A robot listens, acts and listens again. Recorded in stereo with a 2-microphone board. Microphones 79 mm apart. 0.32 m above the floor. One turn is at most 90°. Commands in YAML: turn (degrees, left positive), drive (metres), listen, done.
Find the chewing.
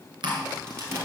turn: -75
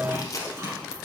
turn: -30
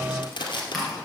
done: "Facing the chewing."